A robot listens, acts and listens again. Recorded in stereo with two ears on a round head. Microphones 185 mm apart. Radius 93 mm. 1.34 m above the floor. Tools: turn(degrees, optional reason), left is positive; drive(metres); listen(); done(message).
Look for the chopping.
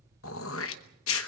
listen()
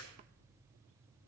listen()
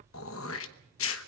done("I can't make out chopping, only throat clearing.")